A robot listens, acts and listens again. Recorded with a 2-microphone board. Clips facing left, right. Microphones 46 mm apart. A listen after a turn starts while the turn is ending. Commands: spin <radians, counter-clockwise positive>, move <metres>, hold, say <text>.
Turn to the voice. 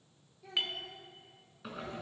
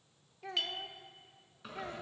spin -1.13
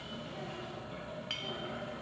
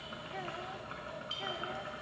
hold
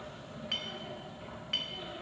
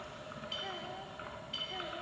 hold
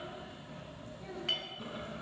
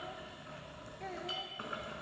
spin -1.48
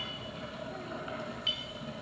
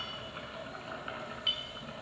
hold
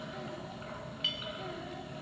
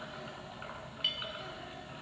hold
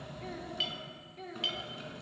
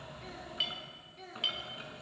spin 0.17
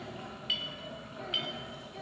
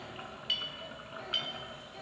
hold
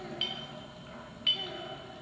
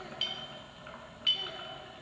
hold
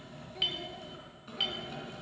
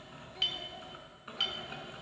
say I heard a child speaking from this way, but can't make it out now.